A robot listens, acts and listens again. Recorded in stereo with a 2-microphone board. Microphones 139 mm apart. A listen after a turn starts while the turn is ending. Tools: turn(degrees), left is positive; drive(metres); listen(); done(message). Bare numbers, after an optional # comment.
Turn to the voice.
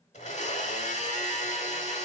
listen()
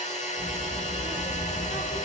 turn(-30)
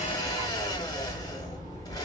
# So it is at 25° left.
turn(25)
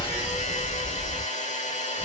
done("Found it: a child speaking, straight ahead, 1 to 2 m away.")